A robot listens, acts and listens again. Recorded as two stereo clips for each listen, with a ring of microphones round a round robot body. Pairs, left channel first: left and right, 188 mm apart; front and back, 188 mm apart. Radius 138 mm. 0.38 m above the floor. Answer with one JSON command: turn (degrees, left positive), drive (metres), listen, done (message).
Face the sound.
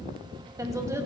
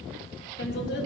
{"turn": -15}
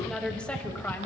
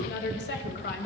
{"turn": 10}
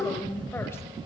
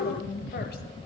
{"turn": 15}
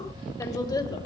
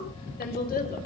{"turn": 25}
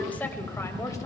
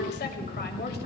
{"turn": 20}
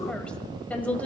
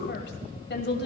{"turn": 10}
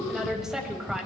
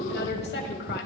{"done": "Found it: a woman speaking, straight ahead."}